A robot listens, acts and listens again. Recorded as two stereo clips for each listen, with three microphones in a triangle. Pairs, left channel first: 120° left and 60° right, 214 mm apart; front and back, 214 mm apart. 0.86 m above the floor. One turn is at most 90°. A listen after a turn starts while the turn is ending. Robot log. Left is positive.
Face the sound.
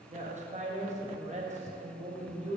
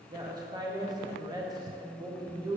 note: The woman speaking: 110° right.
cmd yaw -90
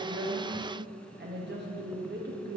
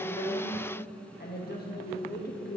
note: The woman speaking is now 35° right.
cmd yaw -35
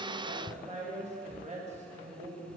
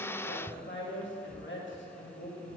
end: Facing the woman speaking.